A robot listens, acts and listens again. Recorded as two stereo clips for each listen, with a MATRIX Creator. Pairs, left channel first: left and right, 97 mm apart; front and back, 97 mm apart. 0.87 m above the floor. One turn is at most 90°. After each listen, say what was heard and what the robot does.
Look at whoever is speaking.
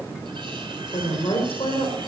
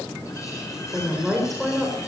The woman speaking: 90° left. Turn 90° left.
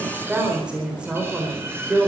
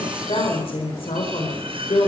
The woman speaking is now 10° right. Turn 10° right.
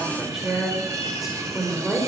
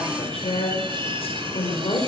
Facing the woman speaking, 2 to 4 m away.